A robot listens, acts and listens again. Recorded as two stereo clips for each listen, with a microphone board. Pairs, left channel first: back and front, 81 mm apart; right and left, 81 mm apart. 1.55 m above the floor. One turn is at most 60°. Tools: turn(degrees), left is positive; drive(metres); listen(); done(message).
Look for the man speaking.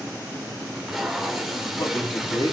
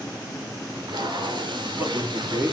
turn(degrees=60)
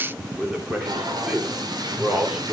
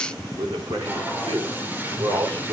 turn(degrees=60)
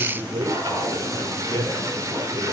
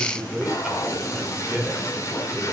done("Facing the man speaking, over 4 m away.")